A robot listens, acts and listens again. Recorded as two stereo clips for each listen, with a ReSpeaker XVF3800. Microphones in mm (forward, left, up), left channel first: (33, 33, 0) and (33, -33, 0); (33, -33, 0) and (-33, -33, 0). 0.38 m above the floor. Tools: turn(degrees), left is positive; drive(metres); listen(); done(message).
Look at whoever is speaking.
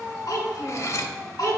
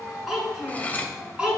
turn(degrees=110)
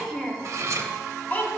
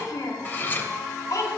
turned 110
turn(degrees=30)
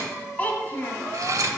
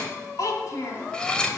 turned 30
turn(degrees=35)
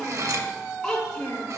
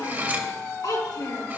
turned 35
turn(degrees=15)
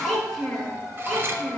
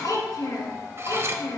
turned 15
done("Facing the child speaking, 2 to 4 m away.")